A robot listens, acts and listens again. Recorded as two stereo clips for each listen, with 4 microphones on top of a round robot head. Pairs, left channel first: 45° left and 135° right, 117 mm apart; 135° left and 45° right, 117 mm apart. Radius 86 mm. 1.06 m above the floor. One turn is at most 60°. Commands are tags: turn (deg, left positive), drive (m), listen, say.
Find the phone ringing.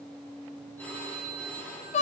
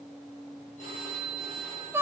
<turn deg="60"/>
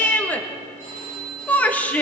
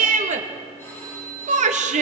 <turn deg="60"/>
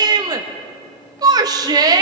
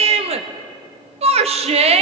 <listen/>
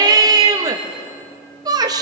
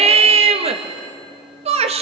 <listen/>
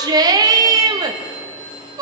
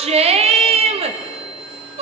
<turn deg="20"/>
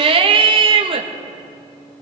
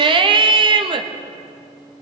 <listen/>
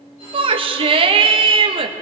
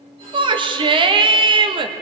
<listen/>
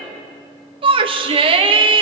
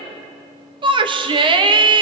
<say>I heard a phone ringing from this way, but can't make it out now.</say>